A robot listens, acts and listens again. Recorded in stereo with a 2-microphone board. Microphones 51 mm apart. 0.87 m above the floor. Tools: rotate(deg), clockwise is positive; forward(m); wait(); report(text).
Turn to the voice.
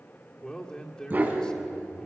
rotate(-20)
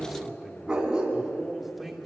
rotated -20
report("Facing the man speaking.")